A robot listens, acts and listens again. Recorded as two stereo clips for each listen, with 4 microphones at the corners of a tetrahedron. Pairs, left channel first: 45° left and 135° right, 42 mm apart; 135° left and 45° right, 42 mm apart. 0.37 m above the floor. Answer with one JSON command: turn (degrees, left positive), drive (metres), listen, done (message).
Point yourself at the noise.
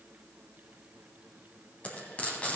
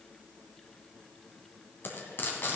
{"turn": 100}
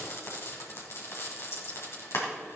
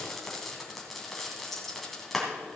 {"turn": 50}
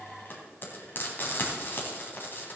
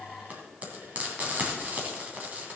{"turn": 10}
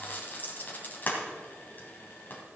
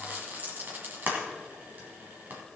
{"done": "Found it: frying, straight ahead, 2 to 4 m away."}